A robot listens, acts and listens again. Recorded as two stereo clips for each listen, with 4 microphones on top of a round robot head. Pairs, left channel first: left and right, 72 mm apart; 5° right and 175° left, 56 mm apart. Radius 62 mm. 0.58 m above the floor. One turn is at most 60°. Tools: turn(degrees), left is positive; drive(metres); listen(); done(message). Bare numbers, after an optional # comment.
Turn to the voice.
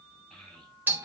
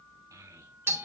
# The child speaking: 175° left.
turn(60)
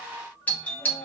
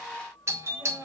# Nothing new. It was at 115° left.
turn(60)
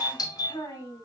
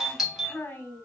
# The child speaking is now 50° left.
turn(50)
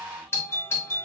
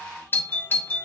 listen()
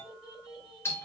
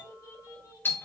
done("Found it: a child speaking, straight ahead, 2 to 4 m away.")